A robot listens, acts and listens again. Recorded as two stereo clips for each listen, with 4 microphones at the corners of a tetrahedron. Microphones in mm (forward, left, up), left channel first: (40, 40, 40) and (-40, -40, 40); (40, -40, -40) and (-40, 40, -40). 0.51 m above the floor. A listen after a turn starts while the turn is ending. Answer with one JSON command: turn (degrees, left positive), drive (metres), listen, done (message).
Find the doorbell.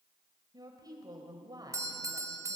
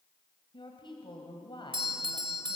{"turn": 165}
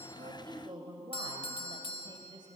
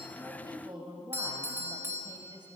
{"turn": 70}
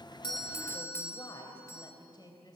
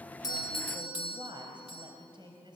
{"turn": -20}
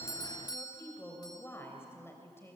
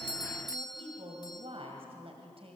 {"done": "Facing the doorbell."}